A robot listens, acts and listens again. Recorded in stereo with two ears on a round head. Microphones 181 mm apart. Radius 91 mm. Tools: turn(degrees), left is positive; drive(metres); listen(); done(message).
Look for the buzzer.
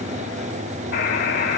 turn(degrees=55)
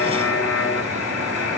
turn(degrees=65)
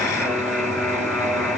done("Facing the buzzer.")